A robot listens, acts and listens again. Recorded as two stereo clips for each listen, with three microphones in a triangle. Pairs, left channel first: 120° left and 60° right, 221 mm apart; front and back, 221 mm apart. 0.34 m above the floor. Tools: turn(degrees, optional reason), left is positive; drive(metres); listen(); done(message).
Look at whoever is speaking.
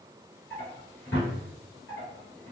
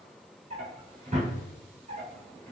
listen()
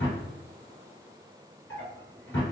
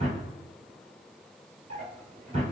listen()
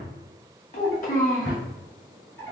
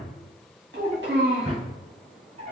turn(degrees=160, reason="The child speaking: 160° left.")
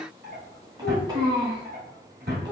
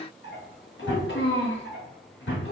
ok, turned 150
turn(degrees=10, reason="The child speaking is now 10° left.")
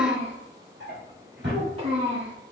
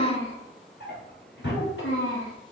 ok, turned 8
done("Found it: a child speaking, straight ahead, 1 to 2 m away.")